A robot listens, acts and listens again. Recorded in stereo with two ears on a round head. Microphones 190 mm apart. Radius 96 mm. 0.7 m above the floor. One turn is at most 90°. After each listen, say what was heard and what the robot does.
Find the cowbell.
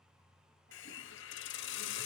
Keep listening.
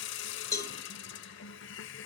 The cowbell: about 15° left or 165° left. Turn 15° left.
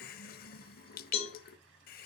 So it is at 145° left. Turn 90° left.
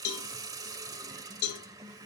The cowbell is now 80° left. Turn 80° left.
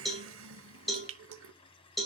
Found it: a cowbell, straight ahead, 2 to 4 m away.